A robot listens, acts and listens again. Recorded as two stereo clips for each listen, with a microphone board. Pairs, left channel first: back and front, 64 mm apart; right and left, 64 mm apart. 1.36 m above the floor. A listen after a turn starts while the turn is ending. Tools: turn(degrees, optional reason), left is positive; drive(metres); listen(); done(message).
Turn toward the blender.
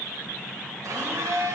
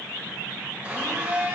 turn(degrees=25, reason="The blender: 25° left.")
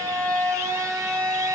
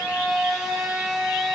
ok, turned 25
turn(degrees=10, reason="The blender is now 10° left.")
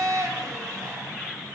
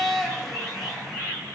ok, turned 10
done("Facing the blender, 2 to 4 m away.")